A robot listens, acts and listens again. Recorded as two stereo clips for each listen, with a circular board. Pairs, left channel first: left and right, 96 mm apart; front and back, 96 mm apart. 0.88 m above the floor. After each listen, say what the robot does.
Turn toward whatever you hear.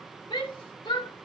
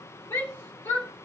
Turn 55° left.
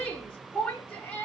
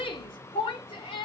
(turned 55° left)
Turn 15° left.
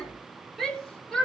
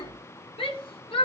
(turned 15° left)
Found it: a shout, straight ahead, 2 to 4 m away.